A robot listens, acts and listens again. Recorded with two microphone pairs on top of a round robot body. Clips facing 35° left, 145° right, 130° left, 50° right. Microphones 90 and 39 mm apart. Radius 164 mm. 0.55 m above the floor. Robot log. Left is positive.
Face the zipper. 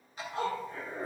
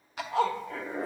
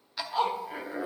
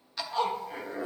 note: The zipper: 155° right.
cmd yaw -155
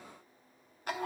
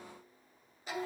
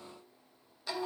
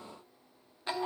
note: The zipper is now 10° left.
cmd yaw +10
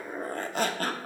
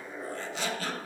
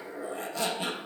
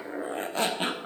end: Facing the zipper, under 1 m away.